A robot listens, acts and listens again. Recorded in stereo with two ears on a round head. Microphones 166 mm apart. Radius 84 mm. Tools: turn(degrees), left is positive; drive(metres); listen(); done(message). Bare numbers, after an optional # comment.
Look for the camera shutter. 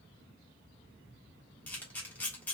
turn(30)
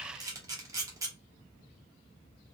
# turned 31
# So it is at 20° right.
turn(-20)
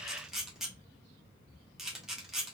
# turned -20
done("Found it: a camera shutter, straight ahead.")